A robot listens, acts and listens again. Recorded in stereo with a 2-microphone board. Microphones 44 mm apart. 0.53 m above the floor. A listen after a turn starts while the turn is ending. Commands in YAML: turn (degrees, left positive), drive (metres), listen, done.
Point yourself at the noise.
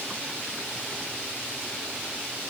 listen: true
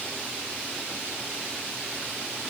listen: true
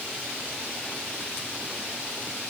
done: "I can't make out anything to turn to."